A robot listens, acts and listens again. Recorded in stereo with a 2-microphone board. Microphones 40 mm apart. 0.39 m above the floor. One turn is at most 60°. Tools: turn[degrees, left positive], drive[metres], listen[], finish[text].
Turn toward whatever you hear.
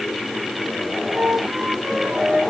Thought: The flute: about 60° right or 120° right.
Action: turn[-60]
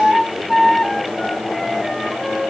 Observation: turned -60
Action: finish[Found it: a flute, straight ahead.]